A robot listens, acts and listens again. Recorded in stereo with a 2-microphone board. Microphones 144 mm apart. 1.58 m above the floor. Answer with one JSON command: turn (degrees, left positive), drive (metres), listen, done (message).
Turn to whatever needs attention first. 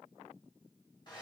{"listen": true}
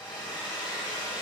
{"listen": true}
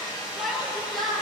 {"turn": 30}
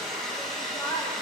{"turn": 150}
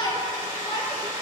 {"turn": 35}
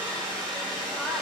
{"listen": true}
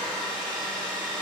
{"listen": true}
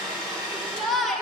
{"done": "Facing the shout, 1 to 2 m away."}